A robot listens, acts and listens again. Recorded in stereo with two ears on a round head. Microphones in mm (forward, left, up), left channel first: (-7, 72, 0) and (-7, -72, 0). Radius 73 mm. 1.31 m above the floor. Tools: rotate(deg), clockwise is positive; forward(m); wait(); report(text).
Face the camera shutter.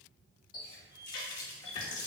wait()
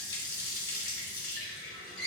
wait()
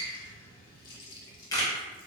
rotate(-20)
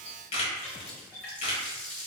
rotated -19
rotate(-140)
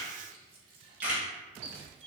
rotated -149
rotate(10)
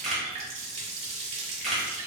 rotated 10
report("Found it: a camera shutter, straight ahead, under 1 m away.")